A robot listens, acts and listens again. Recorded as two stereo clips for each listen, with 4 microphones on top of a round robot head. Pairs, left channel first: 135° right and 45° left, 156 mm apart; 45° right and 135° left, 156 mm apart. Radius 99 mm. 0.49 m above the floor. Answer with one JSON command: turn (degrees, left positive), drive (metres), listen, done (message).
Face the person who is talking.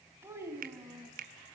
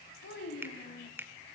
{"turn": -30}
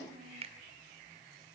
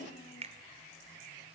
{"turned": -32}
{"listen": true}
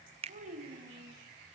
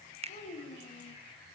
{"done": "Facing the child speaking."}